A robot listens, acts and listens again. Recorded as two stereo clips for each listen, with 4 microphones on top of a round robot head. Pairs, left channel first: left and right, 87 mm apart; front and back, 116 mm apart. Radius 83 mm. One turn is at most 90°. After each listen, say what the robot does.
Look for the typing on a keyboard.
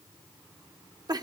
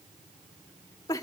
Keep listening.
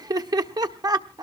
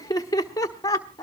Keep listening.
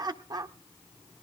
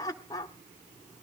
I can't make out typing on a keyboard to turn to.